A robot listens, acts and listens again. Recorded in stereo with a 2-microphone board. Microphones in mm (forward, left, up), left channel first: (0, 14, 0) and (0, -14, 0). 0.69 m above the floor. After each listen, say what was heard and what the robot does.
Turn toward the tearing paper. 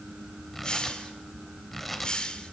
Turn 30° left.
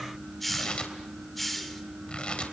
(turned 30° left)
So it is at 145° left. Turn 145° left.
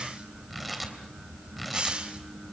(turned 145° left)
Facing the tearing paper, 2 to 4 m away.